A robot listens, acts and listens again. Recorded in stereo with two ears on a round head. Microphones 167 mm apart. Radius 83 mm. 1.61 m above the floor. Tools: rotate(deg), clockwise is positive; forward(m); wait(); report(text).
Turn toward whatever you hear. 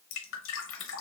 rotate(-90)
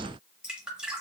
report("Found it: dripping, straight ahead, under 1 m away.")